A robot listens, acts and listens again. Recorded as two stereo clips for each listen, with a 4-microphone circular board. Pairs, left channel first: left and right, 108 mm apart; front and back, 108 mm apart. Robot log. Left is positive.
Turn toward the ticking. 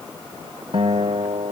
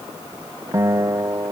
cmd idle
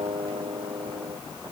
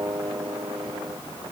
cmd idle
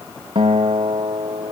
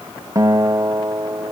end: I can't make out ticking to turn to.